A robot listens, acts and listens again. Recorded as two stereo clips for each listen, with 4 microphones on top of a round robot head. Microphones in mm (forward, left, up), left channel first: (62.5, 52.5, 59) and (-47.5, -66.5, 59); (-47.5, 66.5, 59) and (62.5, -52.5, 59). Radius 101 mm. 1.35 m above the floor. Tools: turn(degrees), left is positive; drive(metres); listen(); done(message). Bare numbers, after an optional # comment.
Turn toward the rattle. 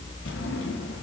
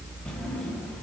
listen()
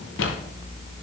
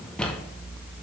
listen()
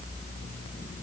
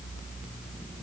done("I can't make out a rattle, only a drawer.")